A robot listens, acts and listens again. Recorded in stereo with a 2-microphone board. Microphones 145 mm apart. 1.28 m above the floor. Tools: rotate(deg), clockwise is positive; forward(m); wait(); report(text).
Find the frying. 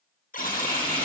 rotate(65)
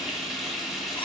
report("Found it: frying, straight ahead, 2 to 4 m away.")